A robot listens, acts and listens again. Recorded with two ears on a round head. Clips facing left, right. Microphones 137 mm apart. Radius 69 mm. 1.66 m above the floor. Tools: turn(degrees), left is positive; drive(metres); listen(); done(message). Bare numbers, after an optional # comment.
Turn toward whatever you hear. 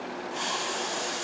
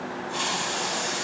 turn(-90)
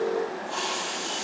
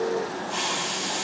done("Found it: a hiss, straight ahead, over 4 m away.")